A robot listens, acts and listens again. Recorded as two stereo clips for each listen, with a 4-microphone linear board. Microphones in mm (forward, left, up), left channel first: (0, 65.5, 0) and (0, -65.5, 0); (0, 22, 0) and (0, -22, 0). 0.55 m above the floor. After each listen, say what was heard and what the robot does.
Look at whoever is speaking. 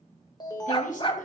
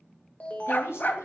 The woman speaking: about 75° left or 105° left. Turn 75° left.
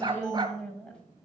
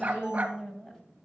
Facing the woman speaking.